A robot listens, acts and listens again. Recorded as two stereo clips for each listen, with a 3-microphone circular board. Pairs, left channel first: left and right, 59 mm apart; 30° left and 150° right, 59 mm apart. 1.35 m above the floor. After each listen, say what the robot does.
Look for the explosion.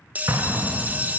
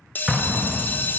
Turn 70° right.
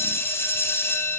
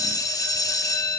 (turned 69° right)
Facing where the explosion came from. I can't hear it now.